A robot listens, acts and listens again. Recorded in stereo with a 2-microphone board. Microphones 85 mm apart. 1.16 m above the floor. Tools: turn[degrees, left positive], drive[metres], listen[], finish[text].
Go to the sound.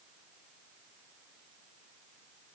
Action: listen[]
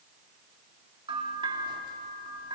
Action: turn[-90]
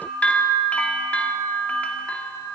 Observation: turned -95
Thought: So it is at 15° left.
Action: turn[15]
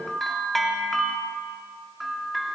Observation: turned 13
Action: drive[1.0]
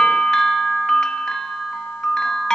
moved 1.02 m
Thought: The bell is now 10° left.
Action: turn[10]
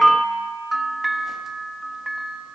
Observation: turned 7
Action: drive[1.0]
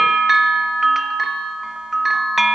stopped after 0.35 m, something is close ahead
Action: finish[Arrived at the bell, straight ahead.]